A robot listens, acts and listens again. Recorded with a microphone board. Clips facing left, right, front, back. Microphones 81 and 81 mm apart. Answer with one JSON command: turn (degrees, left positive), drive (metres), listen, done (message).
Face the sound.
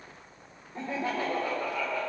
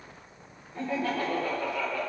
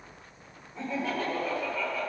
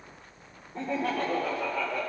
{"turn": 160}
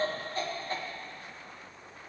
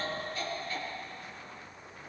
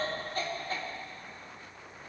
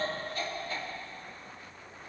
{"turn": 40}
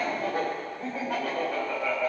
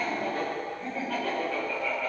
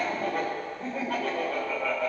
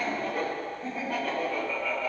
{"turn": 15}
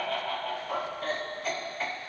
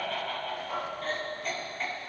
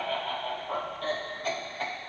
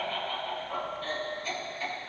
{"done": "Found it: laughter, straight ahead."}